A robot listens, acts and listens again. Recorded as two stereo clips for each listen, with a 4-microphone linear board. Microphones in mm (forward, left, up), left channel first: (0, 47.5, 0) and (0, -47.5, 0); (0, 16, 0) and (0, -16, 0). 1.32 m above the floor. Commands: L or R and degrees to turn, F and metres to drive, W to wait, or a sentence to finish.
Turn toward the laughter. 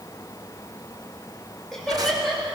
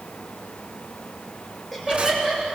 L30
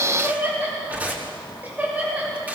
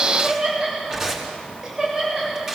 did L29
R15
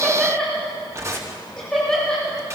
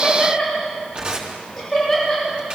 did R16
Found it: laughter, straight ahead.